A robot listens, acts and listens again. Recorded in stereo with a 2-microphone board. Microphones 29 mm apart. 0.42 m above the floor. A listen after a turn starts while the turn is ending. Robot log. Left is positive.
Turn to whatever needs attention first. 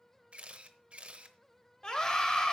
note: The scream: about 30° left or 150° left.
cmd yaw +30
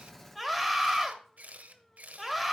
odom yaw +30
end: Found it: a scream, straight ahead.